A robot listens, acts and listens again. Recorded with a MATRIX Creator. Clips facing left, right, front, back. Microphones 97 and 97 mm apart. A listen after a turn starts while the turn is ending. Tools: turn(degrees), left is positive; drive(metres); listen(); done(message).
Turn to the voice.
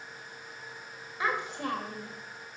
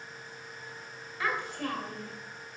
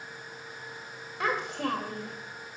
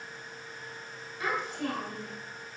turn(degrees=20)
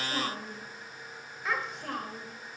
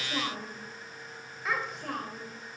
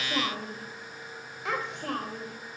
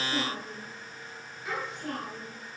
done("Facing the child speaking.")